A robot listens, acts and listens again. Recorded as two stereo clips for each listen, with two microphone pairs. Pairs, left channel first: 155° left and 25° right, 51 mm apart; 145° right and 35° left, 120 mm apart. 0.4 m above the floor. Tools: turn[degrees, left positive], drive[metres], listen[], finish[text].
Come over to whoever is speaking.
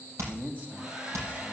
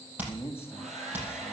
Thought: The man speaking: 80° right.
Action: turn[-80]
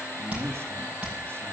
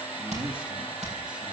Action: drive[1.0]
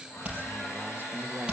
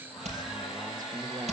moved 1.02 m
Action: drive[1.0]
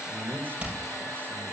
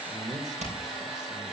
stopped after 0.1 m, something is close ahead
Action: finish[Arrived at the man speaking, straight ahead.]